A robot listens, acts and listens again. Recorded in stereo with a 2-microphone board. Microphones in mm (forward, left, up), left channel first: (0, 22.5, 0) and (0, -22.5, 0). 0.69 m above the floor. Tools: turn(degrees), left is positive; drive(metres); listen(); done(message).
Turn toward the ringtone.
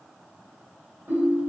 turn(degrees=-60)
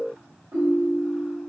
turn(degrees=-60)
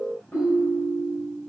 turn(degrees=25)
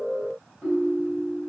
done("Found it: a ringtone, straight ahead, 1 to 2 m away.")